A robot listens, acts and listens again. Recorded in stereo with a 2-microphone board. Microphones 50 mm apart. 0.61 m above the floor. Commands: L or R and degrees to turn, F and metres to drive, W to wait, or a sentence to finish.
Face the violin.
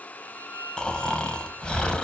L45
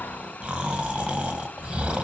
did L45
W
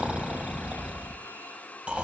W
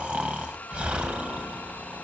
I heard a violin, but can't make it out now. It was about straight ahead or 90° left.